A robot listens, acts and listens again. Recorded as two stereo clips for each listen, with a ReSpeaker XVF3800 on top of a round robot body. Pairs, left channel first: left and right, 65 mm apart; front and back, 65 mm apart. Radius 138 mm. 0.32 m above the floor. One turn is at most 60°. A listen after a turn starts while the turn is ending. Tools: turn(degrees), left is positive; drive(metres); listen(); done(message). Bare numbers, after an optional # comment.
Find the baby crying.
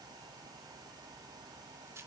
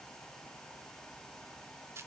listen()
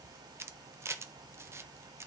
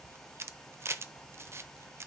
listen()
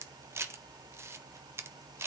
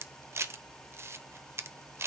done("I can't make out a baby crying to turn to.")